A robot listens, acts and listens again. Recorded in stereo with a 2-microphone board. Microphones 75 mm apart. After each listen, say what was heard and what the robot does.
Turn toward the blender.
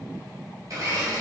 The blender: about 55° right or 125° right. Turn 55° right.
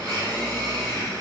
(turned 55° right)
So it is at 70° right. Turn 70° right.
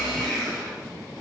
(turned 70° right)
Facing the blender, 1 to 2 m away.